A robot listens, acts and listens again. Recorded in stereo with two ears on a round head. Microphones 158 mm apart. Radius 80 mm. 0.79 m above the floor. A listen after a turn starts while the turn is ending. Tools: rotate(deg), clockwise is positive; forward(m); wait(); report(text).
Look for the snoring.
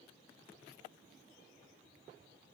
wait()
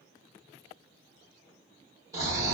rotate(20)
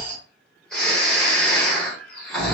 report("Facing the snoring.")